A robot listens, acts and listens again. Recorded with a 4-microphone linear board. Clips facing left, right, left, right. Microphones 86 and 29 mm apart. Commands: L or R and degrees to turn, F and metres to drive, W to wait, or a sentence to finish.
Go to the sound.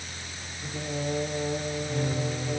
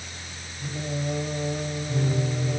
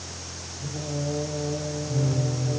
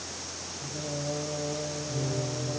L30
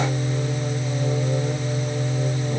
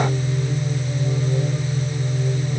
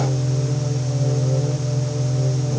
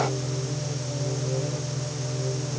L150
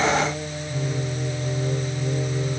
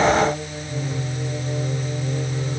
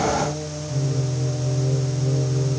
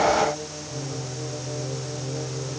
F1.0
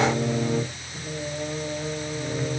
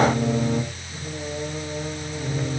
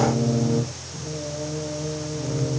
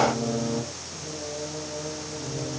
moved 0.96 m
F1.0
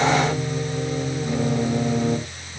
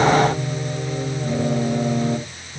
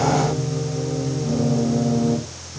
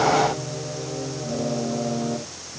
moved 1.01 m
F1.0
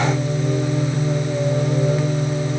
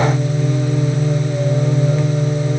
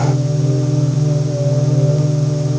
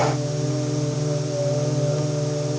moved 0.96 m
F1.0
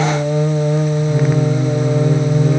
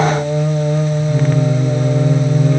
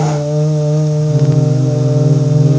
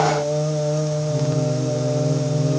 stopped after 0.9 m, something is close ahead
L10
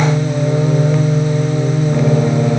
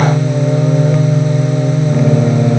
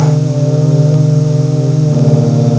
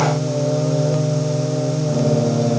Arrived at the singing, straight ahead.